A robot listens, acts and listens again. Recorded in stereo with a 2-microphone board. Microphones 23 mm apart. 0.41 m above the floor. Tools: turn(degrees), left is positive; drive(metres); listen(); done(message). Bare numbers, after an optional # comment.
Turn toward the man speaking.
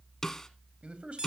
# The man speaking: about 60° right or 120° right.
turn(-60)
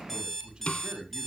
# So it is at 45° right.
turn(-45)
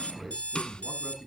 done("Facing the man speaking, 2 to 4 m away.")